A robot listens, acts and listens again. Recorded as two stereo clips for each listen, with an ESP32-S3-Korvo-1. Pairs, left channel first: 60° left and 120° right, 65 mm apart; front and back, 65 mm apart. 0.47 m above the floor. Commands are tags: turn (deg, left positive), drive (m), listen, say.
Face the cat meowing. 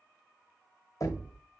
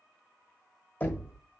<listen/>
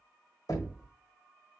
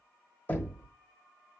<listen/>
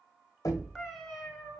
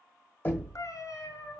<turn deg="-25"/>
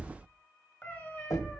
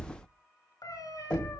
<say>Facing the cat meowing, 1 to 2 m away.</say>